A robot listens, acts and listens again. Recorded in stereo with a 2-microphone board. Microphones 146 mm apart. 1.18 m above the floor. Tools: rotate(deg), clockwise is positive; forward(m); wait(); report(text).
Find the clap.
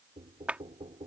rotate(30)
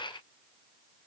wait()
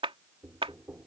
rotate(140)
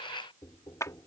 rotate(-20)
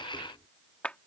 rotate(-10)
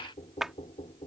report("Facing the clap.")